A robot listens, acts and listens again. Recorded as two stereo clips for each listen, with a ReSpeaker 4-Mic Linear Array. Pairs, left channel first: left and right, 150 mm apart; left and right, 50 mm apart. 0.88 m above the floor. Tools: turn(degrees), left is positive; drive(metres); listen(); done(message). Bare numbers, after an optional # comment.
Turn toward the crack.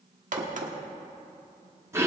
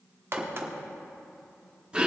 # The crack: about 55° right or 125° right.
turn(-55)
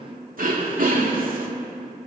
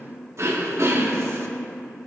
listen()
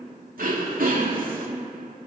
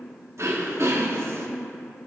done("I heard a crack, but can't make it out now. It was about straight ahead or 70° right.")